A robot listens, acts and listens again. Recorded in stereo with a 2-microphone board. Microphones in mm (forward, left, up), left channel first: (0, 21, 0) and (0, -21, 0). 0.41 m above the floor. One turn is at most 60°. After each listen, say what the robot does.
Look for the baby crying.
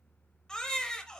Turn 15° left.
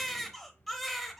Found it: a baby crying, straight ahead, under 1 m away.